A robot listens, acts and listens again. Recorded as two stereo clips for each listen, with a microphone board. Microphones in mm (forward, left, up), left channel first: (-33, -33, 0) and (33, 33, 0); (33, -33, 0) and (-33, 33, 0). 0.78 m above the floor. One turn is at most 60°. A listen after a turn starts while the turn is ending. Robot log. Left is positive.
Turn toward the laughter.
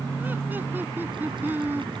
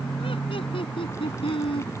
note: The laughter: 25° right.
cmd yaw -25
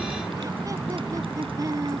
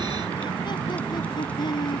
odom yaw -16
end: Found it: laughter, straight ahead.